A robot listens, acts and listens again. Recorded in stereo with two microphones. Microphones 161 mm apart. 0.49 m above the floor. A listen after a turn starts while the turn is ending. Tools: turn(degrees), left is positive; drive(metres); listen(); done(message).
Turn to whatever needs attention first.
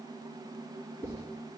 listen()
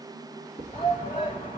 turn(degrees=60)
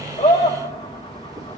turn(degrees=45)
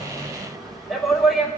done("Facing the shout, 2 to 4 m away.")